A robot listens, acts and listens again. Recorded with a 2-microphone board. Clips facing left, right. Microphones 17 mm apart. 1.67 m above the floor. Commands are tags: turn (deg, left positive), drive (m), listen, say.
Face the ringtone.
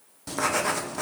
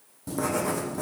<listen/>
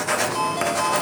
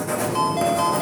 <turn deg="30"/>
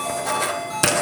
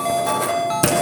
<turn deg="-30"/>
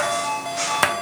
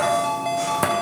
<say>Found it: a ringtone, straight ahead, 2 to 4 m away.</say>